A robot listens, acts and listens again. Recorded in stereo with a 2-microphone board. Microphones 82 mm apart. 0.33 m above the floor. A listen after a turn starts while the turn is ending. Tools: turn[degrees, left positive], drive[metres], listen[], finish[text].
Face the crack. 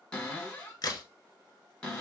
Thought: The crack: about 50° left or 130° left.
Action: turn[50]
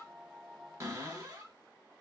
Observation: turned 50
Action: listen[]
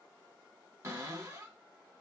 Action: finish[I heard a crack, but can't make it out now. It was about straight ahead or 80° left.]